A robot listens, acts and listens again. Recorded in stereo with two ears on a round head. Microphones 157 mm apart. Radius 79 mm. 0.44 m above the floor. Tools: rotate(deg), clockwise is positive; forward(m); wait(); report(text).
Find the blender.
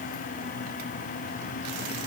wait()
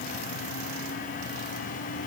wait()
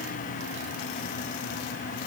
report("I can't make out a blender.")